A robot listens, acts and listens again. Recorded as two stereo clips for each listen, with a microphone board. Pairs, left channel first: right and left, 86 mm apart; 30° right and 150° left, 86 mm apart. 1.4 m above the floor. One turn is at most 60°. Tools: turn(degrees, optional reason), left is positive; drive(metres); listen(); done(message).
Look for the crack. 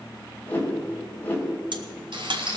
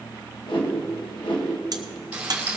turn(degrees=60, reason="The crack: 110° left.")
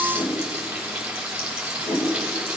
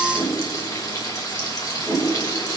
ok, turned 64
turn(degrees=45, reason="Nothing new. It was at 45° left.")
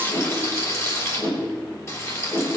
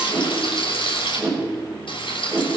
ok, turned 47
done("I heard a crack from this way, but can't make it out now.")